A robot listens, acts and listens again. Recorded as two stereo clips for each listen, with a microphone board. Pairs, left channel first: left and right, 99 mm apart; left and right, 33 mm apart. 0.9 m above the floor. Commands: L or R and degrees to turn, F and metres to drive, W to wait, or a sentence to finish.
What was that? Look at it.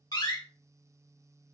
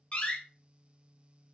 L40
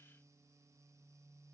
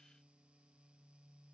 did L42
W
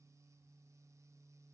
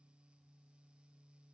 I heard a door slam, but can't make it out now. It was about straight ahead or 95° left.